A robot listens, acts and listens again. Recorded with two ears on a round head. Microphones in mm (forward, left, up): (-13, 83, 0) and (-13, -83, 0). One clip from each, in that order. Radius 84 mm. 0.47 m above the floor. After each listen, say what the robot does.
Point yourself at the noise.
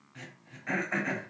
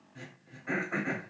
Turn 45° left.
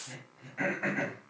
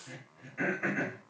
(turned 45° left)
Facing the throat clearing.